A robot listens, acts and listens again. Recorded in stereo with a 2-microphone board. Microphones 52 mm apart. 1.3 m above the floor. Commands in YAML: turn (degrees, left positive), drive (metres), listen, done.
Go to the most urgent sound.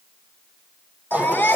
turn: 35
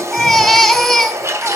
drive: 1.0
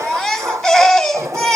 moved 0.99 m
drive: 1.0
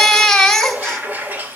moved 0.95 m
turn: 10
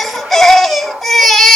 drive: 1.0
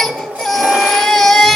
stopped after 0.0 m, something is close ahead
done: "Arrived at the baby crying, straight ahead."